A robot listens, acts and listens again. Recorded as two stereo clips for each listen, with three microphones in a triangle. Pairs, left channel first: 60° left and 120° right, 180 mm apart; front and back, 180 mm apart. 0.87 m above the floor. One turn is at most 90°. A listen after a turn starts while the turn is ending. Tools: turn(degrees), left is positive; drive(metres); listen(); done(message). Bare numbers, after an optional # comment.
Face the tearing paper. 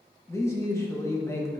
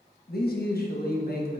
listen()
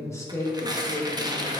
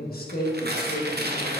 # The tearing paper: 175° left.
turn(90)
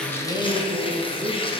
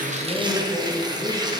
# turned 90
# The tearing paper is now 115° left.
turn(90)
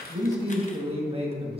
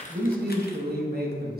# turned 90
# Nothing new. It was at 25° left.
turn(25)
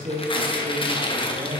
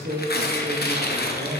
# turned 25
done("Facing the tearing paper.")